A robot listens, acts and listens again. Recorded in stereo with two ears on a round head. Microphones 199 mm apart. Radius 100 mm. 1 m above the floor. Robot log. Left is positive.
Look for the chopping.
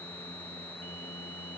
cmd idle
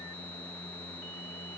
cmd idle
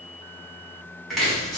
cmd yaw +30
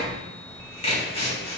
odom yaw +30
note: So it is at 150° left.
cmd yaw +150
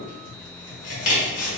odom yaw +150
note: The chopping is now 40° left.
cmd yaw +40
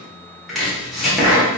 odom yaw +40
end: Found it: chopping, straight ahead, 1 to 2 m away.